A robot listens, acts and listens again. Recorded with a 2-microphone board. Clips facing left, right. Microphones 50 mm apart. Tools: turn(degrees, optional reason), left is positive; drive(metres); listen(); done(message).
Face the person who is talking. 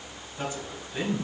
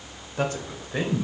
turn(degrees=-70, reason="The man speaking: about 70° right or 110° right.")
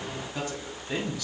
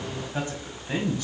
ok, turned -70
turn(degrees=-30, reason="So it is at 30° right.")
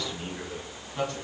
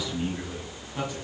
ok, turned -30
done("Found it: a man speaking, straight ahead.")